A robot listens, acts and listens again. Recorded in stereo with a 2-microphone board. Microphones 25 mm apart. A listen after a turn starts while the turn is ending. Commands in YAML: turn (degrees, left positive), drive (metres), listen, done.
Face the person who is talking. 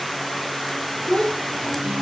turn: 55
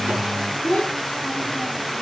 turn: 70
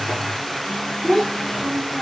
turn: 25
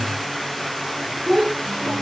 done: "Facing the child speaking, 2 to 4 m away."